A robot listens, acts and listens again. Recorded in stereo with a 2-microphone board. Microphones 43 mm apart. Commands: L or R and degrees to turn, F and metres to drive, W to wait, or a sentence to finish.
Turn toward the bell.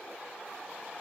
W
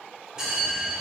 R30
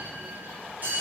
R140
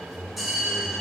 Facing the bell, 2 to 4 m away.